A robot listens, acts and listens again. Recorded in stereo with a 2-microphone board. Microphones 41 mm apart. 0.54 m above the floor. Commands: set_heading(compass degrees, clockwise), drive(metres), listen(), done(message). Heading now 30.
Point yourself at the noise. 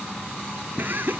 set_heading(80)
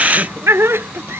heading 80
set_heading(155)
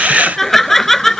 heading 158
done("Facing the laughter.")